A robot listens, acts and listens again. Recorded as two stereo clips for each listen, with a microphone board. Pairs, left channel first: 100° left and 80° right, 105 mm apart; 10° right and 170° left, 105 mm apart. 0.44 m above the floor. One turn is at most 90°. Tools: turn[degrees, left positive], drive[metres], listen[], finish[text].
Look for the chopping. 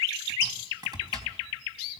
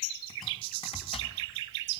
Action: listen[]
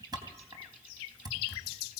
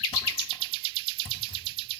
Thought: The chopping: 30° right.
Action: turn[-30]
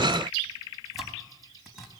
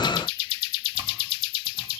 Action: listen[]
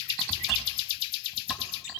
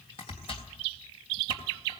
Action: listen[]
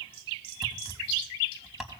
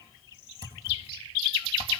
Action: finish[I heard chopping from this way, but can't make it out now.]